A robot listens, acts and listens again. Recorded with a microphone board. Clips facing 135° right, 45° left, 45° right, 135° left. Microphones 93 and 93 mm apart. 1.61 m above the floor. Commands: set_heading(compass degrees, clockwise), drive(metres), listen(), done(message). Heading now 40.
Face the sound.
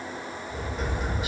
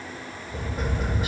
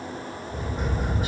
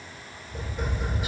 done("Found it: tapping, straight ahead.")